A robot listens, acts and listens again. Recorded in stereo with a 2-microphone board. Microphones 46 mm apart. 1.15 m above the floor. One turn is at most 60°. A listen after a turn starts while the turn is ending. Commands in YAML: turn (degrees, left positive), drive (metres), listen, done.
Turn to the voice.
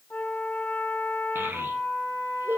turn: -55
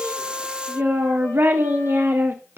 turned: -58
turn: -60
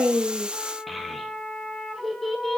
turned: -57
done: "Found it: a child speaking, straight ahead."